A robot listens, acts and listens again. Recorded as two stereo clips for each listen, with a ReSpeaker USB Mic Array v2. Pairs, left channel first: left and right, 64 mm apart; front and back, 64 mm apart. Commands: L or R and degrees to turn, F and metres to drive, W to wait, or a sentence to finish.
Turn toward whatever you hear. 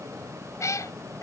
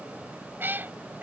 L120
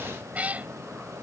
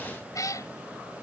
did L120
R25
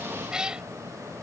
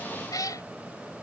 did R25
R15
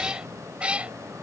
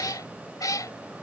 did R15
R20
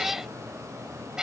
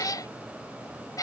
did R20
R10
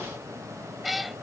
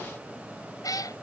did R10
Facing the cat meowing.